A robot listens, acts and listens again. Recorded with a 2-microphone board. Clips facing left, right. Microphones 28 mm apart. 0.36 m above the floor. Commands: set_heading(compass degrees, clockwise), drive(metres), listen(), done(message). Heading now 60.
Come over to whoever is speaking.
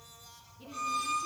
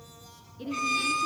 set_heading(130)
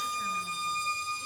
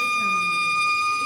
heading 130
listen()
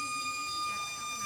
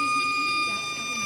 listen()
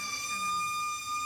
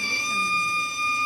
done("I heard a woman speaking, but can't make it out now. It was about straight ahead or 40° right. I did not reach it.")